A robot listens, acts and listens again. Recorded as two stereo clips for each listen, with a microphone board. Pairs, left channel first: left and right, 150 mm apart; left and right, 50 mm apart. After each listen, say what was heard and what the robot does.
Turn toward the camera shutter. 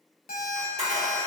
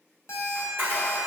The camera shutter: about 50° right or 130° right. Turn 50° right.
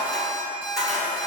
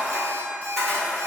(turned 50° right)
Found it: a camera shutter, straight ahead, 1 to 2 m away.